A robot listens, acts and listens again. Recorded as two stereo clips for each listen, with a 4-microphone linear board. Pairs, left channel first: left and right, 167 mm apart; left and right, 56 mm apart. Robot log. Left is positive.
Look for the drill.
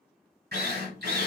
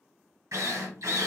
cmd yaw -90
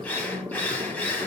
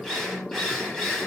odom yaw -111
note: So it is at 10° left.
cmd yaw +10
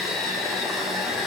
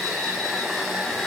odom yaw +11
end: Facing the drill.